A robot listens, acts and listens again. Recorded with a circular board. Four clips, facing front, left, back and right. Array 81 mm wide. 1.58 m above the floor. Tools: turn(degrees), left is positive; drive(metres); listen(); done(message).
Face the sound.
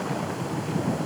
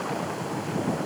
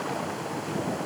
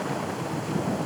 listen()
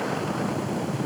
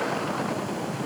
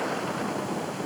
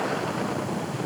listen()
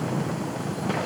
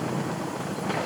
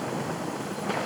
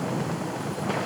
done("I can't make out anything.")